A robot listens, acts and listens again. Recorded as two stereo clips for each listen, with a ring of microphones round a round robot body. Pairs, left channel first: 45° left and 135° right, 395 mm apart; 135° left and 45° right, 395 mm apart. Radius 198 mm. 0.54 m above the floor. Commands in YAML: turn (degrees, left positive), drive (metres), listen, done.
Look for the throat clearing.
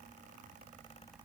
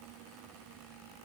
listen: true
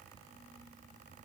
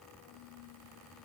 listen: true
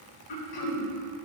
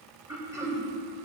turn: 35
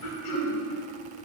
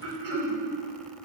done: "Facing the throat clearing."